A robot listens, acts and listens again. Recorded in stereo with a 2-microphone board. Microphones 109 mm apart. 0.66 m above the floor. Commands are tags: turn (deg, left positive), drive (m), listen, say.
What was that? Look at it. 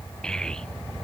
<turn deg="30"/>
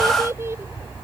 <turn deg="-25"/>
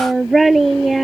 <say>Facing the child speaking.</say>